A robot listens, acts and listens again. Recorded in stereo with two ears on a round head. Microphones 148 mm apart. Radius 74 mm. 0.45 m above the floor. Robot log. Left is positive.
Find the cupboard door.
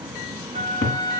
note: The cupboard door: about 65° left or 115° left.
cmd yaw +65
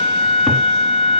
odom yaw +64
cmd idle
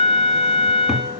cmd idle
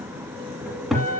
end: Facing the cupboard door.